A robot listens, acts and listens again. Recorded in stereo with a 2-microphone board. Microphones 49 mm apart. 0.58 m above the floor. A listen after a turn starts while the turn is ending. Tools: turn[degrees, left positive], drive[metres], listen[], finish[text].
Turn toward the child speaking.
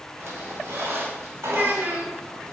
Thought: The child speaking: about 45° right or 135° right.
Action: turn[-45]
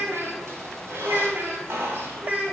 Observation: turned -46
Thought: So it is at 40° right.
Action: turn[-40]
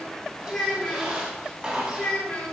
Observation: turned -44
Thought: The child speaking is now 20° left.
Action: turn[20]
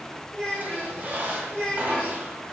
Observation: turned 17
Action: finish[Found it: a child speaking, straight ahead.]